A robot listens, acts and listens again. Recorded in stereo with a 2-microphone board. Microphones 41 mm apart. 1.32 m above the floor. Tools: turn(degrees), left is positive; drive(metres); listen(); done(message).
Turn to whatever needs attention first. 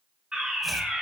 turn(degrees=-20)
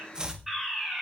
done("Found it: a fire alarm, straight ahead.")